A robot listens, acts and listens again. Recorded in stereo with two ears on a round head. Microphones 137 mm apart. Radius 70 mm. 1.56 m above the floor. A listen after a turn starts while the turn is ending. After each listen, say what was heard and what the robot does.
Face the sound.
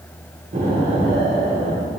The explosion: about 55° right or 125° right. Turn 55° right.
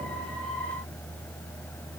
Keep listening.
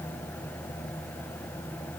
I heard an explosion, but can't make it out now. It was about straight ahead or 70° right.